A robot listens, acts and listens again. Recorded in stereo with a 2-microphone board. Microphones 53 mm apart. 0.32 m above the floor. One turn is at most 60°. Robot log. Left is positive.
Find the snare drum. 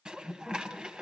cmd idle
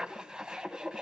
cmd idle
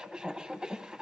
end: I can't make out a snare drum, only dishes clattering.